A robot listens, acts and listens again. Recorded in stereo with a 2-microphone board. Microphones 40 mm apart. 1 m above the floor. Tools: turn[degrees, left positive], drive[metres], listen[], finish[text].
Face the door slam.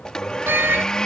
Thought: The door slam: about 65° right or 115° right.
Action: turn[-65]
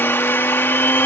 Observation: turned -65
Action: listen[]
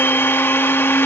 Action: finish[I heard a door slam, but can't make it out now. It was about straight ahead or 50° right.]